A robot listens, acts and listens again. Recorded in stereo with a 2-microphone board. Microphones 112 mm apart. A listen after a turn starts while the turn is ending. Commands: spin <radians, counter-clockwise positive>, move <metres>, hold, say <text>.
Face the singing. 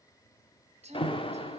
spin -1.57
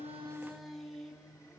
say Found it: singing, straight ahead, 2 to 4 m away.